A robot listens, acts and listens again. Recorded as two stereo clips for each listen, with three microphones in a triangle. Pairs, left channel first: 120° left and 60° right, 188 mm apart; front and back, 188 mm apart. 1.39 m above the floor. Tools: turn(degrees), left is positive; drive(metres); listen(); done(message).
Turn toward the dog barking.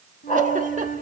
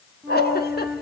turn(degrees=170)
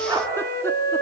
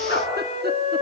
turn(degrees=10)
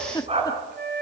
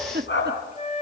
done("Found it: a dog barking, straight ahead, over 4 m away.")